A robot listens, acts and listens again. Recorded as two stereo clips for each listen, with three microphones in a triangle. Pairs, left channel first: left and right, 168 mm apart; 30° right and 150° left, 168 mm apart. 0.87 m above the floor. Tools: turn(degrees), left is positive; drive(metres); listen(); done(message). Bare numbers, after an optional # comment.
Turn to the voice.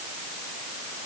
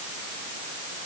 listen()
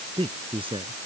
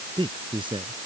# The man speaking: 150° right.
turn(-150)
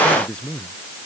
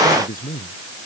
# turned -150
done("Found it: a man speaking, straight ahead.")